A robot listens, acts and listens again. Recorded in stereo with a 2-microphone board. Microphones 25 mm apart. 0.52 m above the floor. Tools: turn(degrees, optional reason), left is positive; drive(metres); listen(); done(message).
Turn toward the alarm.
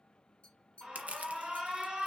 turn(degrees=-45, reason="The alarm: about 45° right or 135° right.")
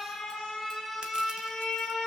done("Found it: an alarm, straight ahead, 2 to 4 m away.")